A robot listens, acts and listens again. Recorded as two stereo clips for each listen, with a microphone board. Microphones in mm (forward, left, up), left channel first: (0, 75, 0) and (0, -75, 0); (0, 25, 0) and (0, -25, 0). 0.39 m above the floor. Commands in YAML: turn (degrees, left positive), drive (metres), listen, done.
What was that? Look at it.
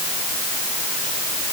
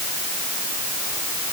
listen: true
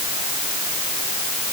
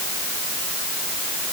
listen: true
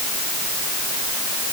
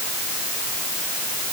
done: "I can't make out anything to turn to."